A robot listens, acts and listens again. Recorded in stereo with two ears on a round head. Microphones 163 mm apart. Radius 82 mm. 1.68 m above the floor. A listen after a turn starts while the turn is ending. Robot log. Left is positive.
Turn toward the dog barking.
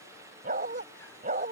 note: The dog barking: about 40° right or 140° right.
cmd yaw -40
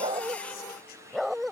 end: Found it: a dog barking, straight ahead.